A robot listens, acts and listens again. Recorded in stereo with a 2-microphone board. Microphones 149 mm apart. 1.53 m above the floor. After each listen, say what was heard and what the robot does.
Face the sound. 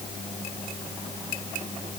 Keep listening.
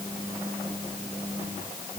Keep listening.
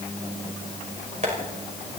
The tapping: about 50° right or 130° right. Turn 50° right.
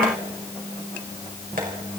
So it is at 80° right. Turn 80° right.
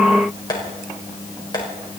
The tapping is now 30° left. Turn 30° left.
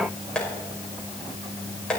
Facing the tapping, over 4 m away.